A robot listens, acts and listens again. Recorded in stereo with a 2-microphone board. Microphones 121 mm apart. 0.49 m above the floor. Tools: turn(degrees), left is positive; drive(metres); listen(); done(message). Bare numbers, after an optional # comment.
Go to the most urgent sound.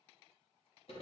listen()
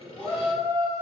turn(30)
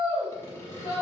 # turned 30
# So it is at 135° left.
turn(135)
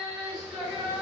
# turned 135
drive(1.0)
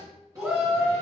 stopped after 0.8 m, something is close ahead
# The shout is now 15° right.
turn(-15)
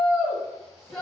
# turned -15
done("Arrived at the shout, straight ahead.")